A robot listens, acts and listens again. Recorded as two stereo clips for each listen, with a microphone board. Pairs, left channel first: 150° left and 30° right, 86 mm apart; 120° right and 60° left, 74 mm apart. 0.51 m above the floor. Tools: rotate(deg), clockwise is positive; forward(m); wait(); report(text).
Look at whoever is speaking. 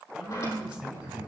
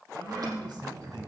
rotate(-50)
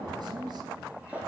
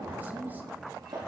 report("Facing the man speaking, 2 to 4 m away.")